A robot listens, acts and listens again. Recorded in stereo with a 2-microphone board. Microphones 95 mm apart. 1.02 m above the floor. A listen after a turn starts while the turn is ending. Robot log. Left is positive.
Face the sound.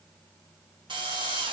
note: The drill: about 60° right or 120° right.
cmd yaw -60
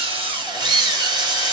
note: So it is at 55° right.
cmd yaw -55
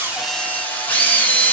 note: The drill is now 20° left.
cmd yaw +20
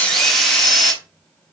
end: Facing the drill, 1 to 2 m away.